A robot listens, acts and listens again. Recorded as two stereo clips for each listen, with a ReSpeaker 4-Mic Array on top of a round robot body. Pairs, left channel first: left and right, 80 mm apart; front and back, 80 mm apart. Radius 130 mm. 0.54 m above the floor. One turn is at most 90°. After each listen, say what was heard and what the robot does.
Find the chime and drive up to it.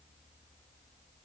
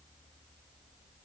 Keep listening.
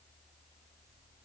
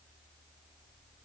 Keep listening.
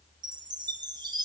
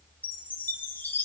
The chime: 65° right. Turn 65° right.
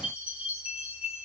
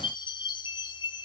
The chime is now 15° right. Turn 15° right.
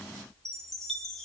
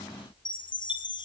Drive 1.0 m forward.
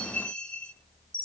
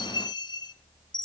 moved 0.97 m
The chime is now 15° left. Turn 15° left.
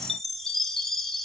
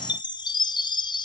Drive 1.0 m forward.
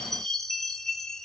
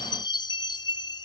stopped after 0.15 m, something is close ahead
I am next to the chime.